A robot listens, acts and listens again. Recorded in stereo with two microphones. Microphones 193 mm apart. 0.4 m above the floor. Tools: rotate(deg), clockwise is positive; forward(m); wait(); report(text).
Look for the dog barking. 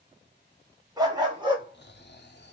rotate(25)
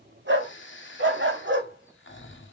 rotate(100)
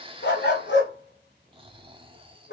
rotate(-70)
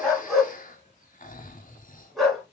report("Facing the dog barking, 1 to 2 m away.")